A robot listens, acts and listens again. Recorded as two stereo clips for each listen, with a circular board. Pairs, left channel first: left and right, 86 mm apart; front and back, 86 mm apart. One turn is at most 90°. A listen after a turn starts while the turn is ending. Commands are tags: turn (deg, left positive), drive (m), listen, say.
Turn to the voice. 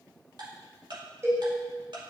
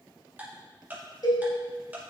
<listen/>
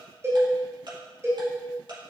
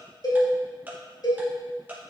<listen/>
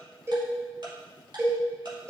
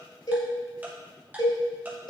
<say>I can't make out anyone speaking, only ticking and a cowbell.</say>